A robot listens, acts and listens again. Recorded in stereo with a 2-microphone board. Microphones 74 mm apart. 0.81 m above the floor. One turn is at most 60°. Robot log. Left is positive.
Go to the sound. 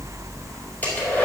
note: The hair dryer: about 20° left or 160° left.
cmd yaw +20
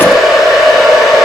cmd fwd 1.0
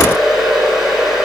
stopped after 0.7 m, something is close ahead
end: Something is in my way. I am facing the hair dryer but have not reached it.